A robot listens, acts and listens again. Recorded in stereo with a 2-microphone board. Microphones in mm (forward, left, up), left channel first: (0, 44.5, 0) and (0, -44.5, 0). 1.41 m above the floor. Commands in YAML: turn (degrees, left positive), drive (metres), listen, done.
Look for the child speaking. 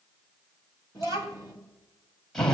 turn: -45
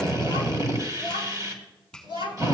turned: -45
turn: -105
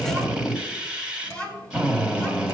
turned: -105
turn: 20
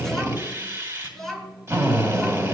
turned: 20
done: "Found it: a child speaking, straight ahead, over 4 m away."